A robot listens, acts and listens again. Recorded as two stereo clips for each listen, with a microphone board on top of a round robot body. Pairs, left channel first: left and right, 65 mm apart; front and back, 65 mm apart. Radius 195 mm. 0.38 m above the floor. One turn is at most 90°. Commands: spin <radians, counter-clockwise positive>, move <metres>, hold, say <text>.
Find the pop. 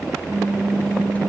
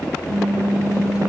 spin -1.57
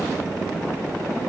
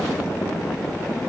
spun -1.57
spin -1.40
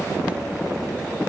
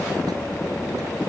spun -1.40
say Facing where the pop came from. I can't hear it now.